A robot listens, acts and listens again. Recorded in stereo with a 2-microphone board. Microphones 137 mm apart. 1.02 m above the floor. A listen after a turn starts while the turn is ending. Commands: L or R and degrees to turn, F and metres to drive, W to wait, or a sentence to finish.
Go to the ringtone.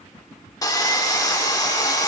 W
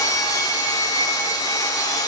W
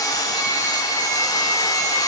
I can't make out a ringtone to turn to.